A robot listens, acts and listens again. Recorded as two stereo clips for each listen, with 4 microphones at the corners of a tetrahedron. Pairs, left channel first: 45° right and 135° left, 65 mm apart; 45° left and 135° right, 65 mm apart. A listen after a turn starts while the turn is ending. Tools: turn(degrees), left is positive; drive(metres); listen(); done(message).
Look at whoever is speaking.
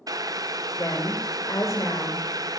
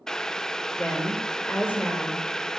turn(degrees=-10)
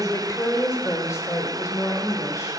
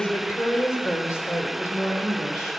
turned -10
done("Found it: a woman speaking, straight ahead, over 4 m away.")